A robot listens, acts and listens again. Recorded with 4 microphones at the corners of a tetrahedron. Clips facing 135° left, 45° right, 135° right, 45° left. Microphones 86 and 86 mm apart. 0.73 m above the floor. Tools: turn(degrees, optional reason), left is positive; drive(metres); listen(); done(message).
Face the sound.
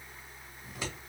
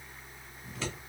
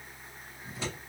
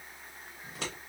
turn(degrees=60, reason="The scissors: 60° left.")
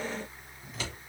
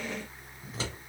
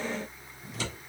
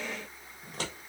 turn(degrees=10, reason="The scissors is now 10° left.")
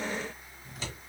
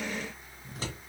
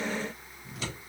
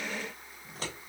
done("Facing the scissors.")